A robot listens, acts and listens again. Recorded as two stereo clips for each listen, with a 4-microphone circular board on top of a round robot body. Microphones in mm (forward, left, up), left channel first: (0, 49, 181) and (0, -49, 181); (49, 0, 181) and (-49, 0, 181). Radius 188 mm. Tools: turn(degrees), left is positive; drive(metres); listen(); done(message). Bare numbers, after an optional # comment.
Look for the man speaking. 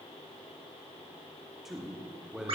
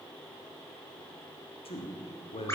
# The man speaking: 10° right.
turn(-10)
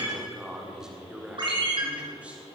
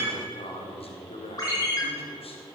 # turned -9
# The man speaking is now 10° right.
turn(-10)
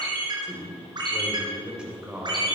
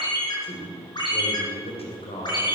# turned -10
# The man speaking is now 10° right.
turn(-10)
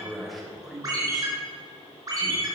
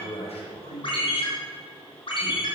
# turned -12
done("Facing the man speaking.")